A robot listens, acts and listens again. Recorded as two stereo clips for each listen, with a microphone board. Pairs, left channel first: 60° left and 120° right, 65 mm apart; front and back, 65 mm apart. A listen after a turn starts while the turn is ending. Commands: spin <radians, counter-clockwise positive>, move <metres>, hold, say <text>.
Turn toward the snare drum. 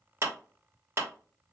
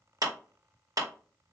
hold
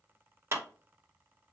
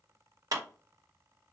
hold
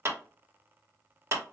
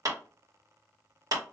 say I can't make out a snare drum, only a clap.